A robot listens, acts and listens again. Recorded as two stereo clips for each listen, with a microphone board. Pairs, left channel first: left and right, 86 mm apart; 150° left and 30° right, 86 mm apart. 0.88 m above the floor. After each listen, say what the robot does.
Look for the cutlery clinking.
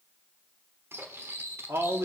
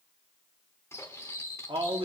Turn 150° right.
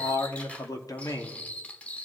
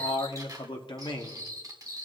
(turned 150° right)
Turn 15° left.
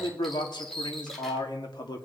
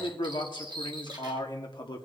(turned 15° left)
Facing the cutlery clinking.